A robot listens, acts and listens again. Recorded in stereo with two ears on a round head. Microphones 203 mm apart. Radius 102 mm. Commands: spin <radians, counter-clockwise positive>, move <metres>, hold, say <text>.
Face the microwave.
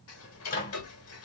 spin 0.61
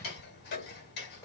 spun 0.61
hold
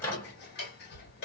spin 0.17
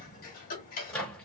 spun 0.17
say Facing the microwave.